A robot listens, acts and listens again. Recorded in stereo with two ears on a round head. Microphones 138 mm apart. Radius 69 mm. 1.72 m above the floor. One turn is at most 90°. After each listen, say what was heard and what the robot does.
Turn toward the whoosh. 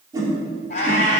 The whoosh: about 25° right or 155° right. Turn 25° right.
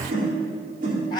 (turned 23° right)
So it is at 130° right. Turn 90° right.
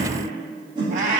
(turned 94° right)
The whoosh is now 35° right. Turn 35° right.
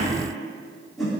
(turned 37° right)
Found it: a whoosh, straight ahead, 2 to 4 m away.